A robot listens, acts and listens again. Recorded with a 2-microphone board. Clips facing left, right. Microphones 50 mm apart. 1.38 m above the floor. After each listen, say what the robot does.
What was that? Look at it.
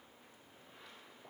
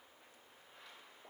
Keep listening.
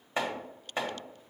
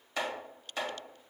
Turn 25° left.
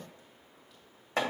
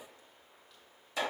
Turn 130° left.
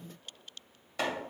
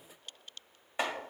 Turn 25° right.
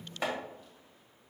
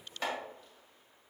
Turn 15° left.
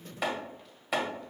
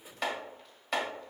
Facing the chopping, 1 to 2 m away.